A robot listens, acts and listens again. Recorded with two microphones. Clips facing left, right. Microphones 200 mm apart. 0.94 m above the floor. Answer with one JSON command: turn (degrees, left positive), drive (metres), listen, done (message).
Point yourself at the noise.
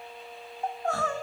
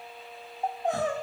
{"turn": -20}
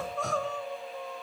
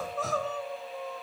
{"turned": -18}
{"done": "Found it: crying, straight ahead, 1 to 2 m away."}